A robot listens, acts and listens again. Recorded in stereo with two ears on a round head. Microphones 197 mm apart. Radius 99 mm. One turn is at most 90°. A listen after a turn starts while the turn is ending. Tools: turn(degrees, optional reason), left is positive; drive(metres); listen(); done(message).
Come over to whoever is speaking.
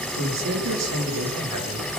turn(degrees=-90)
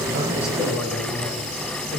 drive(metres=1.0)
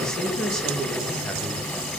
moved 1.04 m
drive(metres=1.0)
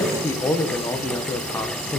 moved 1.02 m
turn(degrees=15, reason="The man speaking is now 15° left.")
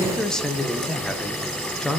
drive(metres=1.0)
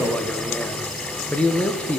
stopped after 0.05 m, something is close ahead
done("I am next to the man speaking.")